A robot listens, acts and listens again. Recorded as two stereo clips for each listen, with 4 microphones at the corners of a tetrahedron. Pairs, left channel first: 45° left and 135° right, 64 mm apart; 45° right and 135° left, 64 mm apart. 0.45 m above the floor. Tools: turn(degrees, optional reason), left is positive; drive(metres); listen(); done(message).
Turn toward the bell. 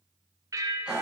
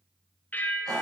turn(degrees=-110, reason="The bell: 110° right.")
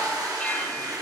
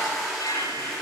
listen()
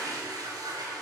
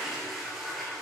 listen()
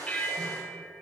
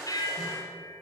turn(degrees=-30, reason="The bell is now 30° right.")
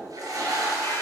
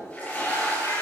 listen()
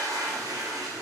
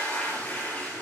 listen()
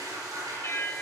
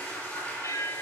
turn(degrees=-10, reason="The bell is now 10° right.")
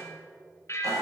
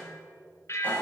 done("Found it: a bell, straight ahead.")